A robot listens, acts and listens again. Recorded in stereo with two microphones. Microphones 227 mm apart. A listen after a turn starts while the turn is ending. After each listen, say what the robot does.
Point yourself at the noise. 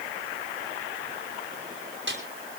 Turn 55° right.
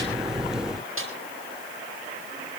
Turn 70° right.
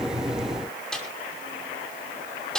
Facing the snare drum, over 4 m away.